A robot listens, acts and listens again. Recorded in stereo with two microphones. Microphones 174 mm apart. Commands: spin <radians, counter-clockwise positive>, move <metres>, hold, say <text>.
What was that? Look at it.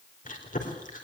spin 0.87
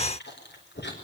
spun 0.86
spin 1.48
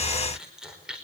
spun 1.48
say Facing the chewing.